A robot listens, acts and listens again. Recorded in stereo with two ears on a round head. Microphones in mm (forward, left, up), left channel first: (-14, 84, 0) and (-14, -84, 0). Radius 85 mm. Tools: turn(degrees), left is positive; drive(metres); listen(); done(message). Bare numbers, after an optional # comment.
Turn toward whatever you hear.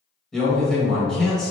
turn(30)
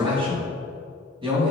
# So it is at 30° right.
turn(-30)
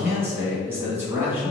# The man speaking is now 10° right.
turn(-10)
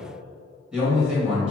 done("Found it: a man speaking, straight ahead, 1 to 2 m away.")